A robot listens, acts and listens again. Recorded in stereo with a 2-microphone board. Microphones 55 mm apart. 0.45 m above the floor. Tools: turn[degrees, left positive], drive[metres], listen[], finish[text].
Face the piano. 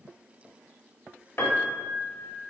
Thought: The piano: about 55° left or 125° left.
Action: turn[55]
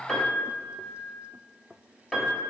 Thought: So it is at 15° left.
Action: turn[15]
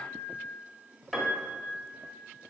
Action: finish[Facing the piano, 1 to 2 m away.]